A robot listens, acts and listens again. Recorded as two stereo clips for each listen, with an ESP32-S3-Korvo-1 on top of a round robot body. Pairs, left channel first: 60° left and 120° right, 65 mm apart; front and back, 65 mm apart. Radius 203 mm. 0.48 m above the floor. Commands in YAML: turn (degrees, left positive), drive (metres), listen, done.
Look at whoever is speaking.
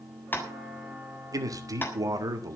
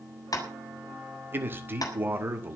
turn: -130
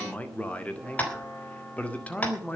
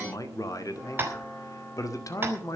done: "Found it: a man speaking, straight ahead, 2 to 4 m away."